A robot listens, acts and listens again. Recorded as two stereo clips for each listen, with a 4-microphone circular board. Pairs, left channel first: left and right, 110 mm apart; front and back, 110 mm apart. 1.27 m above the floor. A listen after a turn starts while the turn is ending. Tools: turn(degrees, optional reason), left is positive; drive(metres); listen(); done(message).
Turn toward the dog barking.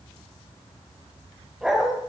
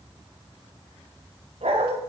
turn(degrees=-175, reason="The dog barking: 175° right.")
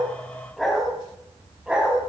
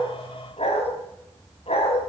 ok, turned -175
turn(degrees=-10, reason="The dog barking is now 10° right.")
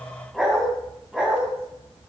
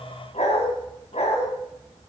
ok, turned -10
turn(degrees=-10, reason="The dog barking is now 10° right.")
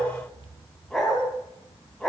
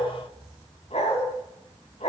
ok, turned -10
done("Found it: a dog barking, straight ahead.")